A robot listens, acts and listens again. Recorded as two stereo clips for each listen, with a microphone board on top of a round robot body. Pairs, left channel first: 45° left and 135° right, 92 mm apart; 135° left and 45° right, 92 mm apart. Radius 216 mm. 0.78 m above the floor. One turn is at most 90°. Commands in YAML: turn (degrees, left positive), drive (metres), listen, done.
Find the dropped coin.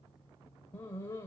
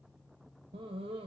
listen: true
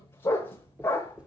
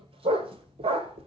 turn: -55
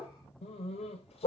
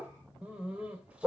done: "Facing where the dropped coin came from. I can't hear it now."